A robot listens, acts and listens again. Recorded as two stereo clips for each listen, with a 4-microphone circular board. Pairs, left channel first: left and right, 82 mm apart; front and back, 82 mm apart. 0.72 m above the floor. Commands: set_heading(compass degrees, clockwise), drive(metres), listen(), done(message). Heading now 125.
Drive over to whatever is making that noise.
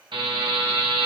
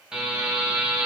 set_heading(225)
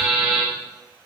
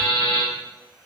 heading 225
set_heading(235)
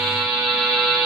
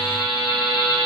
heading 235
drive(1.0)
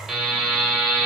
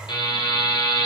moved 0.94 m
drive(1.0)
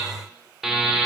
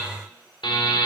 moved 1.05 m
drive(1.0)
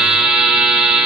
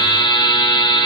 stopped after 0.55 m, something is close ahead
set_heading(245)
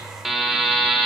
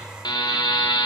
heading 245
done("I am next to the buzzer.")